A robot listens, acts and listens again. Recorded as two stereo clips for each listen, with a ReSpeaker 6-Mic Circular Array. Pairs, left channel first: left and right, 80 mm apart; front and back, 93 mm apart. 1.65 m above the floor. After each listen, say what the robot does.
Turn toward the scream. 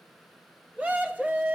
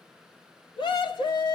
Turn 20° right.
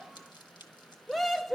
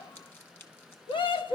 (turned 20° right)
Facing the scream.